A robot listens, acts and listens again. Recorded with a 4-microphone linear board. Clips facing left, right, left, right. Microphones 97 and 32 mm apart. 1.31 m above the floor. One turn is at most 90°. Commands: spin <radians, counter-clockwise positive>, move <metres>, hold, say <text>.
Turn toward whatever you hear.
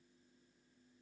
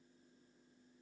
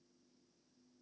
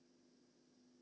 hold
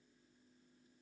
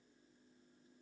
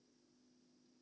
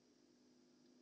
hold
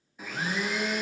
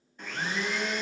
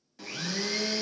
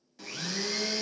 spin 0.52
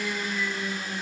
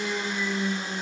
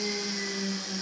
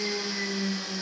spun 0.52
spin -0.44
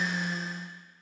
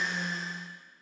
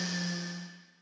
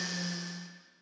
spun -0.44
say Facing the blender, under 1 m away.